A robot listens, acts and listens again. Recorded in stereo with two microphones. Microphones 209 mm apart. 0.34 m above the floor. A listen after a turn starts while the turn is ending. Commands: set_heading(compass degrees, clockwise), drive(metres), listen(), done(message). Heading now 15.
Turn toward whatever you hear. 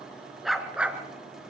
set_heading(45)
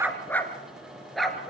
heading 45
set_heading(15)
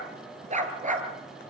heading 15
set_heading(55)
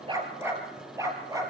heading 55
set_heading(70)
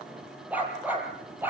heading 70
set_heading(80)
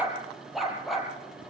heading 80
done("Found it: a dog barking, straight ahead.")